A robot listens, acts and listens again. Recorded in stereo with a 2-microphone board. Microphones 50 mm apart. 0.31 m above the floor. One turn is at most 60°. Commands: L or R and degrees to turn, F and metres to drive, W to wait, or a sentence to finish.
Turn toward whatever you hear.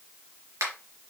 R60
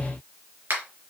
R45
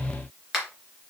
Facing the finger snap, 2 to 4 m away.